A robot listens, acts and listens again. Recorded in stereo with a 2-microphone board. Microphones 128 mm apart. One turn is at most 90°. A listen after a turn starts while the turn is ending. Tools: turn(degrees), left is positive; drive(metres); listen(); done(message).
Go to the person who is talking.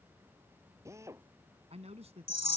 turn(degrees=-55)
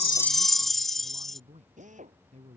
turn(degrees=-65)
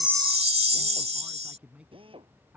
turn(degrees=-10)
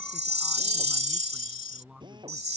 drive(metres=1.0)
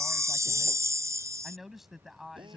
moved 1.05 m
drive(metres=1.0)
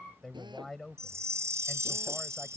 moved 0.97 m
drive(metres=1.0)
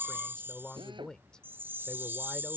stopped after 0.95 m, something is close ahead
turn(degrees=10)
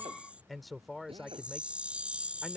done("Arrived at the man speaking, straight ahead.")